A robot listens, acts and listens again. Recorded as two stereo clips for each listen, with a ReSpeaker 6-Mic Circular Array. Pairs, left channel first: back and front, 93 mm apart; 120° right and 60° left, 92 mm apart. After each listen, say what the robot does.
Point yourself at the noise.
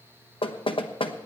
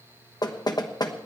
Turn 160° right.
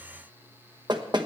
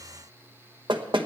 Turn 35° left.
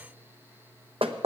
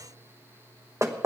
Found it: knocking, straight ahead, 1 to 2 m away.